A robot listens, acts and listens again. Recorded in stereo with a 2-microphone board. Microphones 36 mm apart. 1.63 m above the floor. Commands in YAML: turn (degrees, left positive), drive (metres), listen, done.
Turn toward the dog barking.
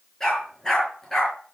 turn: 30
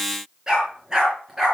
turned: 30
turn: -15
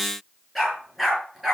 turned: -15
done: "Facing the dog barking, over 4 m away."